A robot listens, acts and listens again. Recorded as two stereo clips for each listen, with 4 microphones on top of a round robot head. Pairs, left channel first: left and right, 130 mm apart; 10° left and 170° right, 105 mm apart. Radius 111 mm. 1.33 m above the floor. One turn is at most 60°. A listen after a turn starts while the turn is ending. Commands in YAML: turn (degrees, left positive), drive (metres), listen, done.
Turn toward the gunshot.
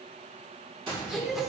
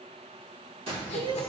turn: -60
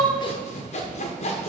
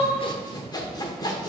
turn: -60
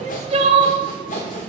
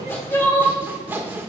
turn: -20
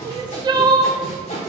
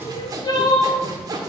done: "Facing where the gunshot came from. I can't hear it now."